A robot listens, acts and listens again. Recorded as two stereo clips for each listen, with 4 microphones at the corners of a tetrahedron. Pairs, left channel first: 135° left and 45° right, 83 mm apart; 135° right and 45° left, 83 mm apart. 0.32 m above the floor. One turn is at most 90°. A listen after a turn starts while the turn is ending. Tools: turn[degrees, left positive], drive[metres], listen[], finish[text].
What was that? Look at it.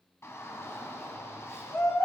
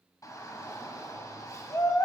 Thought: The shout: 175° right.
Action: turn[-90]
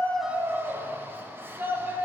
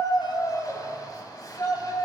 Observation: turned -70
Thought: The shout is now 105° right.
Action: turn[-90]
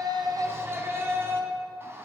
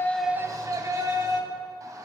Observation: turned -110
Action: finish[Facing the shout.]